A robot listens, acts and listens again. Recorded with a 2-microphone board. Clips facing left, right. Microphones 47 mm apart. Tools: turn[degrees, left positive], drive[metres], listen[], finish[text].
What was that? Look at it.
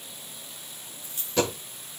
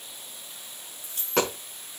Thought: The dropped coin: about 70° right or 110° right.
Action: turn[-70]
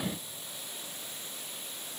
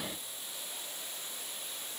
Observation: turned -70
Action: listen[]
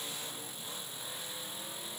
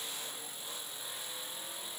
Action: finish[I heard a dropped coin, but can't make it out now. It was about straight ahead or 40° right.]